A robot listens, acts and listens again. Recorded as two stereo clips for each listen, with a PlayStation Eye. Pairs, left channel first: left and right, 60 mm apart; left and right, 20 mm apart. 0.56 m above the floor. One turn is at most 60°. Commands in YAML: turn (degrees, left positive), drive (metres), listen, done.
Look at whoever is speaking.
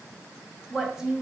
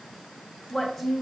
turn: -30
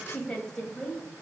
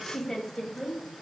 turn: 10
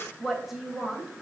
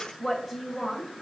turn: -10
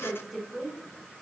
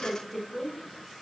turn: -10
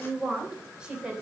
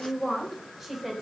turn: -15
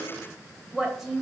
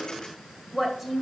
done: "Facing the woman speaking."